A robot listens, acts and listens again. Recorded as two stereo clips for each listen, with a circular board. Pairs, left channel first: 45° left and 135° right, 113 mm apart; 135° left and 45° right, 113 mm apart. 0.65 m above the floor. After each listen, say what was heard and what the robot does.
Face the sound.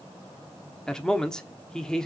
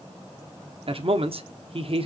The man speaking: 35° right. Turn 35° right.
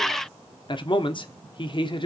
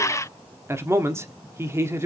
The man speaking is now 15° left. Turn 15° left.
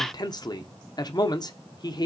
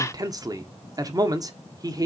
Found it: a man speaking, straight ahead.